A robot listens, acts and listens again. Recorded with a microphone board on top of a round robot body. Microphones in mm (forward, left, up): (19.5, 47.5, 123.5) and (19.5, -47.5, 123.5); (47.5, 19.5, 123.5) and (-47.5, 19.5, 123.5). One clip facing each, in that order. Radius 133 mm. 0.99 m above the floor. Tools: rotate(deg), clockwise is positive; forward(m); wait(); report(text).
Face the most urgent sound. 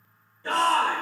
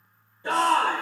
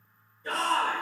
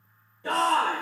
rotate(165)
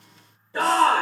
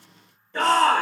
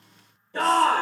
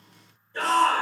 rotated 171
report("Facing the shout, 1 to 2 m away.")